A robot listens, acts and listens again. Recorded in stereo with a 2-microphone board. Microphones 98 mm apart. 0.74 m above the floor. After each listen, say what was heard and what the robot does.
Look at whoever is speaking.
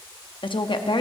The woman speaking: about 55° left or 125° left. Turn 55° left.
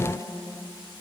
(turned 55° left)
So it is at 40° left. Turn 40° left.
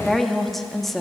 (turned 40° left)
Facing the woman speaking.